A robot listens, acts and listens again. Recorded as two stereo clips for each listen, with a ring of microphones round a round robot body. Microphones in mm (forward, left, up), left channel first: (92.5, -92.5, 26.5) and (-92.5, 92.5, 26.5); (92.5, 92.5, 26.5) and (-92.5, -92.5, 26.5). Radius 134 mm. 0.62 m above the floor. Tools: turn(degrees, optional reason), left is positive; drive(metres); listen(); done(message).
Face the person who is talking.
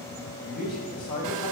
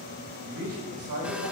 turn(degrees=-100, reason="The man speaking: 100° right.")
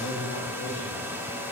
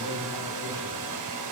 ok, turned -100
listen()
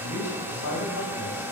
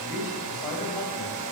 turn(degrees=-20, reason="The man speaking is now 20° right.")
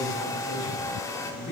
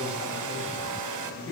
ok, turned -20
done("Facing the man speaking.")